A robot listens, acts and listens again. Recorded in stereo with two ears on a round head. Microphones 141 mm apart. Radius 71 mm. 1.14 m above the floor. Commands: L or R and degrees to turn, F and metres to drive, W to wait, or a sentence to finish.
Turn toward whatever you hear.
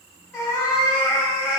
L15
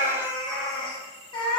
L150
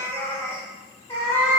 L15
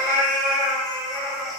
Facing the cat meowing, under 1 m away.